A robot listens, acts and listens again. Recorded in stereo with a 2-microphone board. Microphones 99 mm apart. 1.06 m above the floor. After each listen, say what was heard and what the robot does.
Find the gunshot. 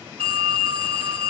Keep listening.
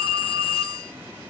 Keep listening.
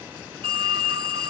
I can't make out a gunshot to turn to.